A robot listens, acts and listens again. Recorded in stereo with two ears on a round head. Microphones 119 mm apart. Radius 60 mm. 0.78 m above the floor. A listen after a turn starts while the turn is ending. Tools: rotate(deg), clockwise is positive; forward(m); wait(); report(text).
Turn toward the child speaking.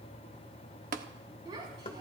rotate(35)
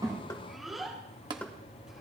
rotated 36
report("Found it: a child speaking, straight ahead.")